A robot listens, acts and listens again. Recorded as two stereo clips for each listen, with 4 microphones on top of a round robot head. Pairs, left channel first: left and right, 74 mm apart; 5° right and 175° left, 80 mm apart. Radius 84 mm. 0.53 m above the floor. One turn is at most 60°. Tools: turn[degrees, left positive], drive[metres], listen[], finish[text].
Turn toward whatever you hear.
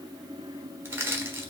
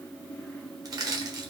Thought: The crushing: 145° right.
Action: turn[-60]
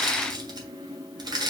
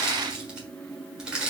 Thought: The crushing is now 105° right.
Action: turn[-60]
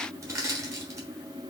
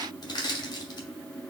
Thought: The crushing is now 40° right.
Action: turn[-40]
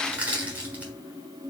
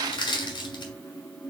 Thought: The crushing is now 20° right.
Action: turn[-20]
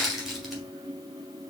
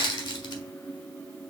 Action: finish[Facing the crushing, 1 to 2 m away.]